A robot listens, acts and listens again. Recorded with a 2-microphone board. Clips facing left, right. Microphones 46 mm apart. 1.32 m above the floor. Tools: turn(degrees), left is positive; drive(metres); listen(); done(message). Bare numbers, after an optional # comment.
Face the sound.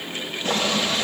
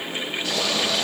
# The boiling: about 35° left or 145° left.
turn(35)
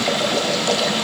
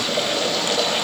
# So it is at 110° left.
turn(110)
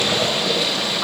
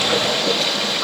# The boiling is now 10° left.
turn(10)
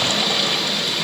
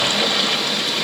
done("Facing the boiling, over 4 m away.")